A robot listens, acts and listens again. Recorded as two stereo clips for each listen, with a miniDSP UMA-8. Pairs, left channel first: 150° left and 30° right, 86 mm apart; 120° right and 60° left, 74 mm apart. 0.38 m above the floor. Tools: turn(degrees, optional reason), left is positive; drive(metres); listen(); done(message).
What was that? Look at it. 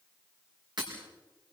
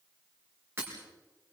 done("Facing the breaking glass, over 4 m away.")